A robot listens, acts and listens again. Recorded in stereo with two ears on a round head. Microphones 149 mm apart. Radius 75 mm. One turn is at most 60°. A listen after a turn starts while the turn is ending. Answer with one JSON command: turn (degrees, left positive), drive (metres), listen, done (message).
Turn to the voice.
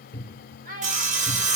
{"turn": -50}
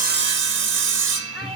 {"listen": true}
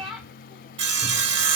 {"done": "Found it: a child speaking, straight ahead, 2 to 4 m away."}